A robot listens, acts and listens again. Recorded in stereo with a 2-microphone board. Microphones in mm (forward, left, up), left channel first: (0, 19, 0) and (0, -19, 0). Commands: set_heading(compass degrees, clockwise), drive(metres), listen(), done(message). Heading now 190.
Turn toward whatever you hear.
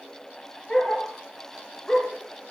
set_heading(170)
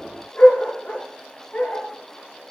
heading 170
set_heading(30)
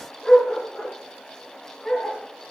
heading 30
done("Facing the dog barking, 2 to 4 m away.")